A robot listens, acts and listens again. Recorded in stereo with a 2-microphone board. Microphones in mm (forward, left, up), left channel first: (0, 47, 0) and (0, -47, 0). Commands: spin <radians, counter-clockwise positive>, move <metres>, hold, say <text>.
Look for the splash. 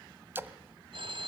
spin -0.44
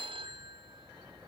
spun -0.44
hold
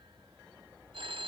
say I heard a splash, but can't make it out now. It was about straight ahead or 130° right.